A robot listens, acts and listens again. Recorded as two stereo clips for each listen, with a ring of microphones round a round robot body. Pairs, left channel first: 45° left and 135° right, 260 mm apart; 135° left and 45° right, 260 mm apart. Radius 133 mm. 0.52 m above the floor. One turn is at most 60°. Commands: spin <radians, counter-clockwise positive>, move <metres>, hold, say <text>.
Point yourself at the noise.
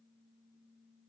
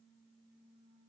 hold
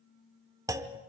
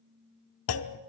spin 1.05
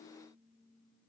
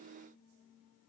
spin 1.05
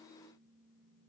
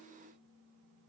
spin 0.52
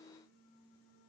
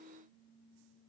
say I heard a clunk from this way, but can't make it out now.